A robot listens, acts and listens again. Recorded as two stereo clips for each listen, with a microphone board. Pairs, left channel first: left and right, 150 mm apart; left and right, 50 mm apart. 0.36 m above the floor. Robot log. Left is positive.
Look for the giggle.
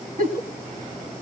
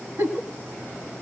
note: The giggle: about 65° right or 115° right.
cmd yaw -65
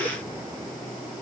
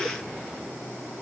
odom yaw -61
cmd idle
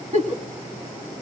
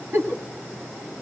note: So it is at 50° right.
cmd yaw -50
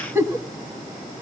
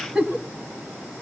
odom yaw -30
note: The giggle is now 20° right.
cmd yaw -20
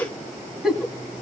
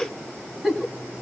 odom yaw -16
end: Found it: a giggle, straight ahead, 1 to 2 m away.